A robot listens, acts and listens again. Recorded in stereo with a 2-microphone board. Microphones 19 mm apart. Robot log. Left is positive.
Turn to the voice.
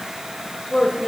note: The woman speaking: about 55° left or 125° left.
cmd yaw +55
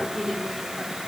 end: Facing the woman speaking.